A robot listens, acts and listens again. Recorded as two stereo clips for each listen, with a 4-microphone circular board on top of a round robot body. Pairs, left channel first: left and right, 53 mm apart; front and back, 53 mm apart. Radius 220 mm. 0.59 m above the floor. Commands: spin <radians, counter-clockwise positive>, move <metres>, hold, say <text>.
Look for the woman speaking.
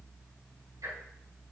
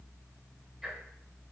hold
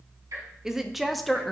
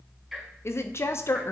spin 0.17
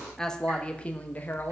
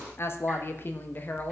spin 0.79
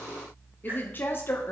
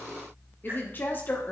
spin 0.87
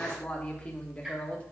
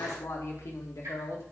spin 0.35
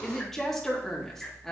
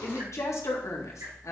say Facing the woman speaking.